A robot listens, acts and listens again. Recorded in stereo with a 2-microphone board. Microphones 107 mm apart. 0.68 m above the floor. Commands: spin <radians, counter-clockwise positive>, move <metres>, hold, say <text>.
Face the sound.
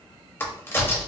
spin 0.35
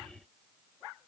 hold
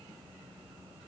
say I heard a crack, but can't make it out now. It was about straight ahead or 140° left.